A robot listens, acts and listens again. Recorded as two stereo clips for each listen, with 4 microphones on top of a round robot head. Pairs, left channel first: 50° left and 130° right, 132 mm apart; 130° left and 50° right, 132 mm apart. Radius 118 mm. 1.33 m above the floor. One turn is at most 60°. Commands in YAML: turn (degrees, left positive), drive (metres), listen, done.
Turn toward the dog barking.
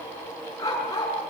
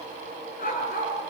turn: 60
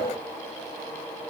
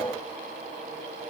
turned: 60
turn: 55
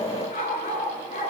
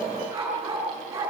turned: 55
turn: 20
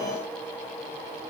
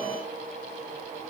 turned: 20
listen: true
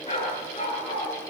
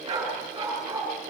turn: 10
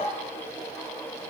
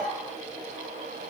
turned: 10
listen: true
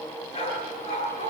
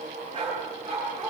done: "Found it: a dog barking, straight ahead."